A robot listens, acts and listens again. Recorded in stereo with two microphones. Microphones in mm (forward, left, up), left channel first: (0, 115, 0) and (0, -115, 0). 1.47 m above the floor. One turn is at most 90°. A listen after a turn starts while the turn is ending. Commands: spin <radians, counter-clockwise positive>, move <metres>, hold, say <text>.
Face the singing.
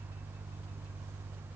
hold
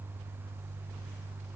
hold
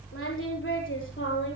spin 0.96
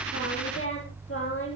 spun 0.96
spin 1.22
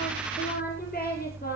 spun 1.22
spin 0.70
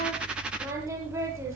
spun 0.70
spin -0.17
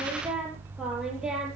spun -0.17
say Facing the singing.